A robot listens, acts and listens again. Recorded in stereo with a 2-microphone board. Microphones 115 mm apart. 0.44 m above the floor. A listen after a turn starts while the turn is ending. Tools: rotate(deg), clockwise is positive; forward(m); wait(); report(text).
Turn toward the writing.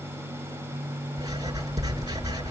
rotate(30)
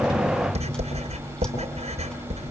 rotate(115)
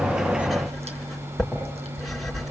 report("Facing the writing.")